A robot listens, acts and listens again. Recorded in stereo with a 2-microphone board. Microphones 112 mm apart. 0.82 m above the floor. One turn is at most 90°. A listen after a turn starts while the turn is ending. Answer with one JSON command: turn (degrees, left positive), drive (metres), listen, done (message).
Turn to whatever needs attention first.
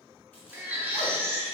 {"turn": -15}
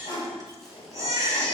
{"turn": -90}
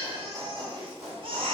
{"turn": -65}
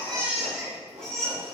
{"done": "Facing the baby crying, 1 to 2 m away."}